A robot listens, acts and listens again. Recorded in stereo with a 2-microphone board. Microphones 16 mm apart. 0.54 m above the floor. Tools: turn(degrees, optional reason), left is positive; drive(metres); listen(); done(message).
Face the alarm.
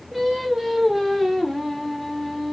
listen()
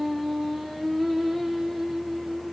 listen()
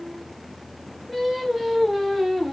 done("I can't make out an alarm to turn to.")